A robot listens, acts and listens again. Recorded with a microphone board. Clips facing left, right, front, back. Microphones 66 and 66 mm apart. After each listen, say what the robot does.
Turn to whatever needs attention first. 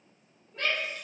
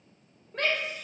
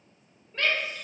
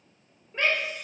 Turn 105° right.
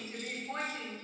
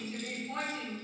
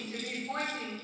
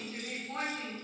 Turn 30° left.
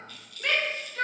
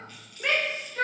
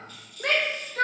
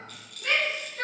Turn 10° right.
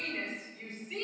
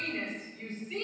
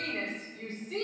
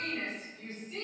Facing the shout, over 4 m away.